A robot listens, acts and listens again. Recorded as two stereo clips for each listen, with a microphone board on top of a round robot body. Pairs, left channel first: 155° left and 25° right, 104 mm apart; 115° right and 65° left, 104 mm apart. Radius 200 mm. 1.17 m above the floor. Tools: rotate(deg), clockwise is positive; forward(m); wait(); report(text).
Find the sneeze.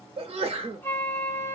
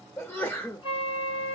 rotate(45)
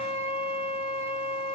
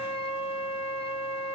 report("Facing where the sneeze came from. I can't hear it now.")